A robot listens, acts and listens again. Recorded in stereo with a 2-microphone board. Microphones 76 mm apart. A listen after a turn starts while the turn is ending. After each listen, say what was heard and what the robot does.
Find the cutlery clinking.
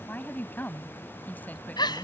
Keep listening.
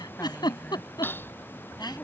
The cutlery clinking: about 25° left or 155° left. Turn 25° left.
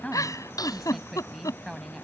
So it is at 125° left. Turn 125° left.
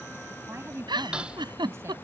The cutlery clinking is now 15° right. Turn 15° right.
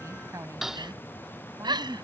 Found it: cutlery clinking, straight ahead.